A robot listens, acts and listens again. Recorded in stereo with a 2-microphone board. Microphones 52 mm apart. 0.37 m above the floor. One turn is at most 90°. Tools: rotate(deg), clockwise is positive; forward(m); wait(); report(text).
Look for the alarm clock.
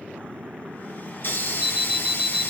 rotate(15)
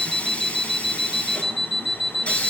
report("Found it: an alarm clock, straight ahead, under 1 m away.")